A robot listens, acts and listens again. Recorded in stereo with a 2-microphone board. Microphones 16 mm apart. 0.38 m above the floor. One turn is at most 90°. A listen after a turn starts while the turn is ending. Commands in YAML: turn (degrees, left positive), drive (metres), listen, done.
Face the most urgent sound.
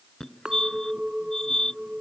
turn: 45
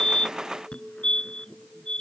turn: 85
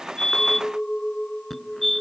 turn: 10
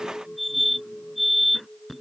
done: "Facing the fire alarm."